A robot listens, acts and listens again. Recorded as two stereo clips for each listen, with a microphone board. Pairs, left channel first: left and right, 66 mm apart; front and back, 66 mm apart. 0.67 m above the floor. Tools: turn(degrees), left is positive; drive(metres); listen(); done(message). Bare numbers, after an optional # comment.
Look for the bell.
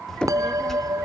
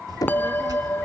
# The bell: 60° right.
turn(-60)
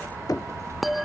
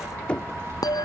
done("Found it: a bell, straight ahead.")